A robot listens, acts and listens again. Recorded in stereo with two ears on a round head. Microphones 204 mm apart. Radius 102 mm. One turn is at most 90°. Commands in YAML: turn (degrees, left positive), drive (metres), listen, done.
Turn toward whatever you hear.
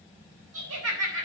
turn: -70
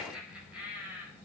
done: "Facing the laughter, over 4 m away."